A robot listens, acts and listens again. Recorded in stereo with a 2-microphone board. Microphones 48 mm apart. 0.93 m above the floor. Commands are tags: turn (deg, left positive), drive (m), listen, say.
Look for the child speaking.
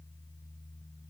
<listen/>
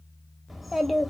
<turn deg="30"/>
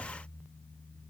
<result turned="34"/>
<listen/>
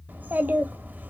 <turn deg="-35"/>
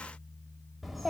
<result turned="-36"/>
<say>Found it: a child speaking, straight ahead.</say>